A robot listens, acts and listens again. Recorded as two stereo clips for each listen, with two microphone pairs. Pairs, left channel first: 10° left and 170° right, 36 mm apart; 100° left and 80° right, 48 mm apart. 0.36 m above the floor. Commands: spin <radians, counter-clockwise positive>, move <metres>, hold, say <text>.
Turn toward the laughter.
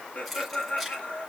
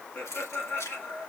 spin 1.13
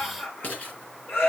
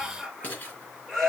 say Facing the laughter, over 4 m away.